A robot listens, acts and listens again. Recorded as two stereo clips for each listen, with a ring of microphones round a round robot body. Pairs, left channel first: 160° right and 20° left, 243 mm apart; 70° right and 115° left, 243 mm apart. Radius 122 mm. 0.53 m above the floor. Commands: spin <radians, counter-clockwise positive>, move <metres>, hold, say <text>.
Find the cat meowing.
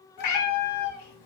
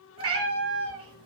spin 3.14
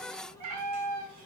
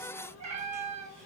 spin 0.87
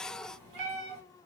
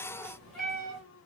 spin 0.35
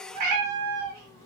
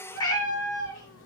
say Facing the cat meowing, under 1 m away.